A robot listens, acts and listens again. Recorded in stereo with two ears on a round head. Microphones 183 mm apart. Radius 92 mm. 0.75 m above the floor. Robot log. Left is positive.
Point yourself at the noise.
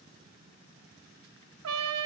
note: The trumpet: about 75° right or 105° right.
cmd yaw -75
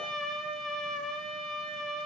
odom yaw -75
end: Facing the trumpet.